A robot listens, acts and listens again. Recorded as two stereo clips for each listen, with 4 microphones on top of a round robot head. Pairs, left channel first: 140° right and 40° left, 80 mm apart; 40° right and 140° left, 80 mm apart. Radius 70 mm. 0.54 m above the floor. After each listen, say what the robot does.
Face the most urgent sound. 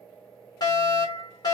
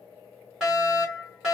Turn 135° right.
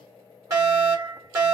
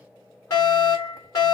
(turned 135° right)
Facing the fire alarm.